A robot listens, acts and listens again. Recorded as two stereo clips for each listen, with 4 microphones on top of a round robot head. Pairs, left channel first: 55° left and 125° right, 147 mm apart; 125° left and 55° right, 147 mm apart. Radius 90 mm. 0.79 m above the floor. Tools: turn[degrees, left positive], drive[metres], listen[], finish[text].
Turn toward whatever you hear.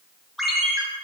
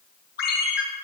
Thought: The ringtone: 145° left.
Action: turn[145]
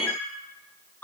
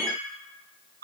Thought: The ringtone is now 25° right.
Action: turn[-25]
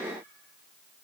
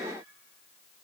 Action: listen[]
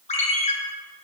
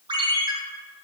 Action: finish[Facing the ringtone, 2 to 4 m away.]